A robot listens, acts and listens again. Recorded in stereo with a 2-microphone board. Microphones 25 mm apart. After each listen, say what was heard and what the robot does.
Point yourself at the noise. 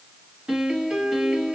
The piano: about 40° right or 140° right. Turn 40° right.
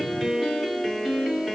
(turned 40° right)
Found it: a piano, straight ahead, 1 to 2 m away.